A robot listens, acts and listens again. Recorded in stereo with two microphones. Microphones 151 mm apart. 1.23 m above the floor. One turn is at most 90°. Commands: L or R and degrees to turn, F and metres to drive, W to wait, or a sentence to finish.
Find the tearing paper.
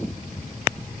W
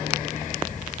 W
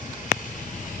I can't make out tearing paper to turn to.